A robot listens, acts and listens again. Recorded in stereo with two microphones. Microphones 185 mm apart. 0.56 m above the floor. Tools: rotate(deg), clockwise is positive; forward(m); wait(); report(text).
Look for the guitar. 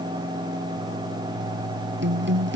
rotate(90)
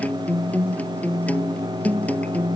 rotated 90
rotate(-10)
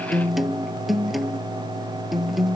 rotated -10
report("Facing the guitar.")